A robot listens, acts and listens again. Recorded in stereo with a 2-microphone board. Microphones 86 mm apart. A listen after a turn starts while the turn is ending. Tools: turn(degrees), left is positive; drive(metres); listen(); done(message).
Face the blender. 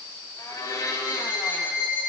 turn(degrees=40)
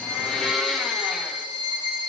done("Found it: a blender, straight ahead, 2 to 4 m away.")